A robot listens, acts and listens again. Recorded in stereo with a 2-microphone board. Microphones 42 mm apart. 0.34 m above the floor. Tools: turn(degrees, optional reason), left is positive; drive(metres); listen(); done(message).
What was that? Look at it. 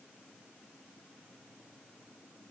listen()
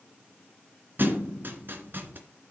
turn(degrees=-55, reason="The thud: about 55° right or 125° right.")
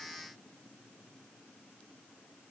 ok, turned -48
listen()
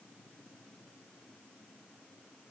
done("I heard a thud, but can't make it out now. It was about 5° right or 80° right.")